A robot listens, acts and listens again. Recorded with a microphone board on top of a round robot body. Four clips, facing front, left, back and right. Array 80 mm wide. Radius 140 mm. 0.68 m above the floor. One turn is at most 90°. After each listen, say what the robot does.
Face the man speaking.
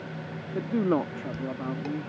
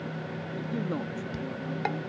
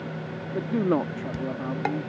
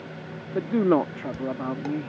Turn 90° right.
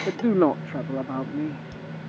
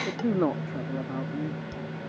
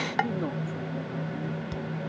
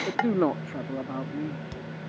Turn 10° right.
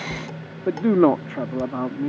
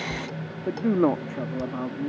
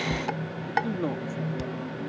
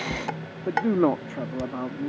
Facing the man speaking.